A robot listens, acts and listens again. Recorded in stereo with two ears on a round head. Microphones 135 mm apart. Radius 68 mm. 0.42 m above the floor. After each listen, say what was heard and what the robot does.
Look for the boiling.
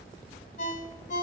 Keep listening.
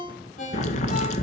The boiling: about 50° left or 130° left. Turn 50° left.
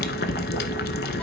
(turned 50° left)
So it is at 75° left. Turn 75° left.
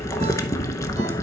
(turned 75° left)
The boiling is now 20° left. Turn 20° left.
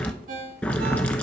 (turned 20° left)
The boiling is now 10° left. Turn 10° left.
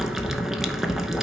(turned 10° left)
Facing the boiling.